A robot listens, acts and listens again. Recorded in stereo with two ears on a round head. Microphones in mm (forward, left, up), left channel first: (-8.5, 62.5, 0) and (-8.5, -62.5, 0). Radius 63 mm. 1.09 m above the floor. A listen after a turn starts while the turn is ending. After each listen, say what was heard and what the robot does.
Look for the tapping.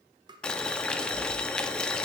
The tapping: about 35° right or 145° right. Turn 35° right.
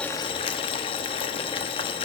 Keep listening.
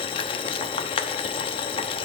Keep listening.
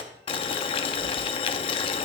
I heard tapping, but can't make it out now. It was about straight ahead or 110° right.